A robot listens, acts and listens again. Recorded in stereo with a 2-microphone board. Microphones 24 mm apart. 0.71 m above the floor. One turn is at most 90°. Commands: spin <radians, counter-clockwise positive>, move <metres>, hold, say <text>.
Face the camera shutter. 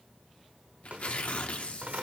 hold
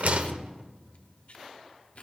hold
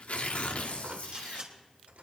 spin -0.87
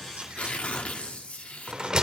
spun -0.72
hold
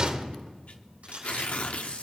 spin -1.48
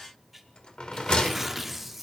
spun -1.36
spin -0.17
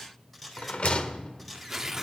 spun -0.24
say Found it: a camera shutter, straight ahead.